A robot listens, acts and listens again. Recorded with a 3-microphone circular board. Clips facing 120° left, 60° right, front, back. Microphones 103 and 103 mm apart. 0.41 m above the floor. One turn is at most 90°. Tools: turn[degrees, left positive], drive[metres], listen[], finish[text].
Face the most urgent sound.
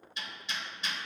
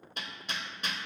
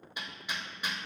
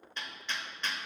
Action: listen[]
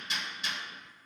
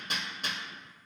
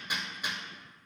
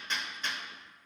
Action: listen[]
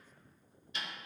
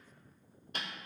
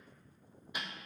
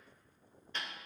Action: finish[I can't make out anything urgent to turn to.]